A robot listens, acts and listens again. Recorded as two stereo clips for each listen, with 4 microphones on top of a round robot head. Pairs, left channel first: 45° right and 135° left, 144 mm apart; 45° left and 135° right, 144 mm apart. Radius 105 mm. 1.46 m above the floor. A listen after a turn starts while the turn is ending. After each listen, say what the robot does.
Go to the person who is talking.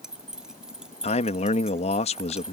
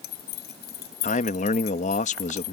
Drive 1.0 m forward.
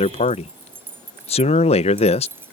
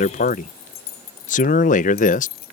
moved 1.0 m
Drive 1.0 m forward.
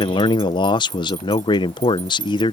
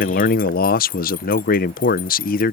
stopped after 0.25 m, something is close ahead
Turn 15° left.
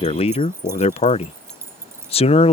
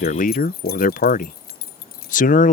Arrived at the man speaking, straight ahead.